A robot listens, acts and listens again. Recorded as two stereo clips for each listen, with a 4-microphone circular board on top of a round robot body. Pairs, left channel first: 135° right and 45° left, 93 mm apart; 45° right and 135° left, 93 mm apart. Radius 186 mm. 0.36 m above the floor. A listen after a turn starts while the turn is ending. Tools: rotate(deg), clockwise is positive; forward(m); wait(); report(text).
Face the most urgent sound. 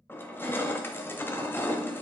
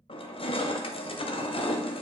wait()
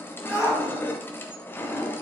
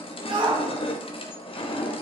rotate(-165)
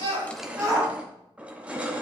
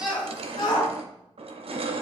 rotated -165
report("Facing the shout.")